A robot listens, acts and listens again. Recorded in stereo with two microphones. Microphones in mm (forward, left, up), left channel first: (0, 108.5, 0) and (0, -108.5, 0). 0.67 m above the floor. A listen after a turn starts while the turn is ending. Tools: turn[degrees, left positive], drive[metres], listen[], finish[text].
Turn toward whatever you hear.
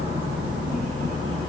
Action: listen[]
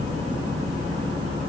Action: listen[]
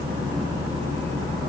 Action: finish[I can't make out anything to turn to.]